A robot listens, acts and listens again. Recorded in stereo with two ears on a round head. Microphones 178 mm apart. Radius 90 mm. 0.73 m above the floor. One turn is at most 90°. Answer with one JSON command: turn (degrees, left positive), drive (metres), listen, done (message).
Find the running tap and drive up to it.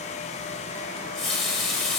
{"turn": 30}
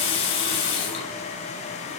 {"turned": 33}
{"turn": 90}
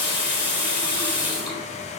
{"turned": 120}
{"turn": 25}
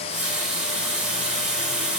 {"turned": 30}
{"drive": 1.0}
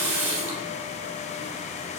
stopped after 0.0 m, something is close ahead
{"turn": -10}
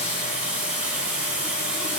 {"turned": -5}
{"done": "Blocked. The running tap is further on, straight ahead."}